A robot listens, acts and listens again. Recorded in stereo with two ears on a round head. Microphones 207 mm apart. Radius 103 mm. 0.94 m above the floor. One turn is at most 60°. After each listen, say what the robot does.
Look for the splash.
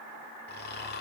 Keep listening.
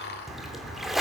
Turn 30° left.
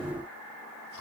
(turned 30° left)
Keep listening.
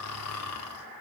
I heard a splash, but can't make it out now. It was about 30° right or 150° left.